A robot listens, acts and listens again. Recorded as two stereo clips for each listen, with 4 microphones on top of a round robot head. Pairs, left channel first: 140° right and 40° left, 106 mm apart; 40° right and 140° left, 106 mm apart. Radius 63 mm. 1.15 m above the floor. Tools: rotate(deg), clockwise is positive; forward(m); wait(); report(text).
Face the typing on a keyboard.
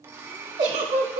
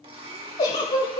wait()
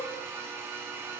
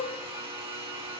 wait()
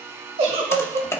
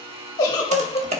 rotate(-155)
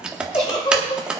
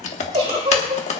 rotate(45)
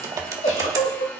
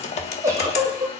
rotate(20)
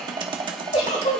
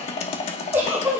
rotate(10)
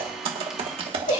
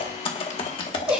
report("Found it: typing on a keyboard, straight ahead.")